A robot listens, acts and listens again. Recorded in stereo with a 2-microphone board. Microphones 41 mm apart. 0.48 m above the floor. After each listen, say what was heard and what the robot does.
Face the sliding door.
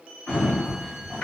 The sliding door: about 65° left or 115° left. Turn 65° left.
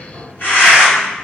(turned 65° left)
So it is at 40° left. Turn 40° left.
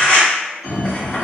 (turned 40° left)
Facing the sliding door, 1 to 2 m away.